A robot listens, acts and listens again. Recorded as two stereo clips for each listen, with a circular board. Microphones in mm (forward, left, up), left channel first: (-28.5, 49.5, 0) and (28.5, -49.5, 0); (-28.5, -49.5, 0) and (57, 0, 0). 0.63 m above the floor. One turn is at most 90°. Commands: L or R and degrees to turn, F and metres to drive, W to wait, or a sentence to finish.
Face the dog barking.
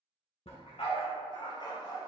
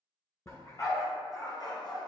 L90
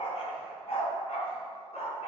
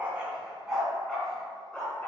L90
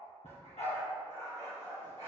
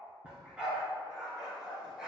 L90
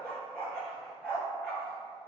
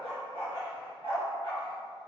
L40
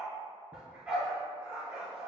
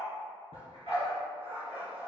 L20
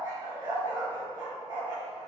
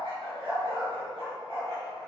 Found it: a dog barking, straight ahead.